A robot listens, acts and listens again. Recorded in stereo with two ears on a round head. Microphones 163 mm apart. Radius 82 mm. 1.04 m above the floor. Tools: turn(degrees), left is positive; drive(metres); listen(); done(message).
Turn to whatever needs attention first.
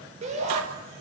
turn(degrees=-40)
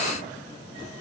listen()
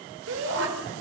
turn(degrees=-100)
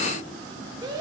turn(degrees=-20)
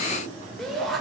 done("Facing the shout.")